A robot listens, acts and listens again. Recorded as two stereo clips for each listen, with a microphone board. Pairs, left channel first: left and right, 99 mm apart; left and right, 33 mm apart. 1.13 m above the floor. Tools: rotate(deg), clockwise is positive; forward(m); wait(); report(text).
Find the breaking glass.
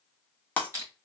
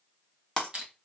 rotate(-20)
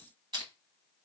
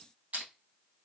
wait()
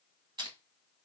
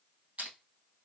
report("I heard breaking glass, but can't make it out now. It was about straight ahead or 140° left.")